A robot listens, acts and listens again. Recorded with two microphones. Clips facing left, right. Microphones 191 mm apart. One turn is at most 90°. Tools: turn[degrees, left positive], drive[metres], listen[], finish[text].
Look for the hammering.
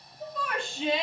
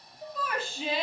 Action: listen[]
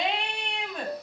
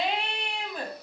Action: listen[]
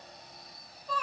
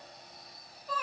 Action: finish[I can't make out hammering to turn to.]